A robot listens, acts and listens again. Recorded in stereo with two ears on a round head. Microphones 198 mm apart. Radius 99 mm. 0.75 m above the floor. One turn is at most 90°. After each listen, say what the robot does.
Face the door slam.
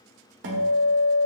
Keep listening.
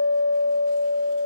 Keep listening.
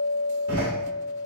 Turn 90° right.
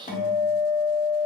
I heard a door slam from this way, but can't make it out now.